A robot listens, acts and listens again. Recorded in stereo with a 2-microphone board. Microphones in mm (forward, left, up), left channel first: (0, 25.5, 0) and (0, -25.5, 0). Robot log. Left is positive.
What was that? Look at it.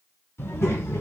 note: The child speaking: about 65° left or 115° left.
cmd yaw +65
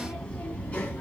note: So it is at 30° left.
cmd yaw +30
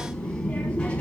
note: The child speaking is now 25° left.
cmd yaw +25
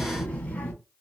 note: The child speaking is now 30° left.
cmd yaw +30
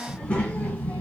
note: The child speaking is now 25° left.
cmd yaw +25
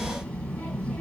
note: The child speaking is now 20° left.
cmd yaw +20
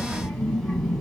end: Found it: a child speaking, straight ahead, 1 to 2 m away.